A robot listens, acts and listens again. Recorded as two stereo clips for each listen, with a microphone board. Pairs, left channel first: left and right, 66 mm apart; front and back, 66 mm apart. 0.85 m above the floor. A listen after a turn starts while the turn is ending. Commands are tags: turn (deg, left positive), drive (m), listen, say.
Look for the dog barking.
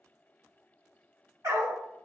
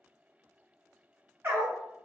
<turn deg="-125"/>
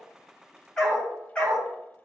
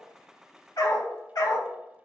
<turn deg="20"/>
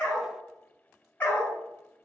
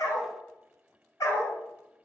<turn deg="25"/>
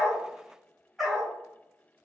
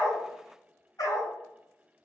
<say>Found it: a dog barking, straight ahead.</say>